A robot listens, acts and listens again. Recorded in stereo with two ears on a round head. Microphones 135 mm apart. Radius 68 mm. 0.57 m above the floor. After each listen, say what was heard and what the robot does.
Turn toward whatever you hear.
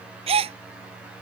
The gasp: about 40° right or 140° right. Turn 40° right.
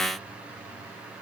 Keep listening.
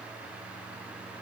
I heard a gasp, but can't make it out now. It was about straight ahead or 100° right.